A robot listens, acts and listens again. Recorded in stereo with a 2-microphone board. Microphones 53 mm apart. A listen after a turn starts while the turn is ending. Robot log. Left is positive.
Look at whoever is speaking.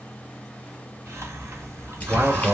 note: The man speaking: about 55° right or 125° right.
cmd yaw -55
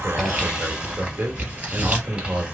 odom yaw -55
note: So it is at 55° right.
cmd yaw -55
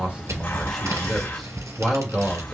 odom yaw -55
note: The man speaking is now 10° left.
cmd yaw +10
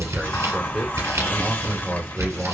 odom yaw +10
end: Found it: a man speaking, straight ahead.